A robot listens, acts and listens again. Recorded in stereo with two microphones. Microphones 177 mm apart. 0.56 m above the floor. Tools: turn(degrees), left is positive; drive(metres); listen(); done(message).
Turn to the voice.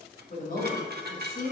turn(degrees=60)
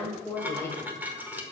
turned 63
turn(degrees=15)
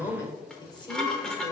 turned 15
turn(degrees=30)
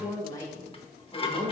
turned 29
turn(degrees=30)
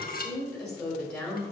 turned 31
done("Facing the woman speaking, 1 to 2 m away.")